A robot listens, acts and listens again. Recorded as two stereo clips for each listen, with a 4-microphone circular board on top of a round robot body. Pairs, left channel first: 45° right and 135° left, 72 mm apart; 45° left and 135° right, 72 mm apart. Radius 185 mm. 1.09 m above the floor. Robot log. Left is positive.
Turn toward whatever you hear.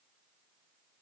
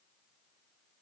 cmd idle
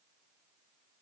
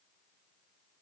cmd idle
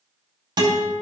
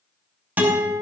note: The guitar: 155° left.
cmd yaw +155
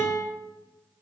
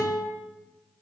note: The guitar is now 10° left.
cmd yaw +10
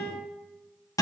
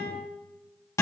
end: Facing the guitar.